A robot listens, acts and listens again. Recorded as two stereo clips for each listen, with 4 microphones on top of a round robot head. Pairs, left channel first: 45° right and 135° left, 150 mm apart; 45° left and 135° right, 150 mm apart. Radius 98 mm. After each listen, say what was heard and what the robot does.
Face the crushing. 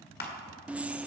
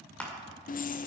The crushing: 40° right. Turn 40° right.
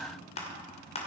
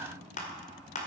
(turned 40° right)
Facing the crushing, 2 to 4 m away.